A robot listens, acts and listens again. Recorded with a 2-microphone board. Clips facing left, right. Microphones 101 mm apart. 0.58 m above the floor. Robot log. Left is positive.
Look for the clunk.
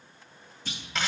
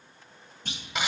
note: The clunk: about 55° right or 125° right.
cmd yaw -55
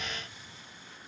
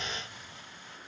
cmd idle
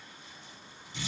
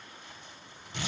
end: I heard a clunk, but can't make it out now. It was about straight ahead or 70° right.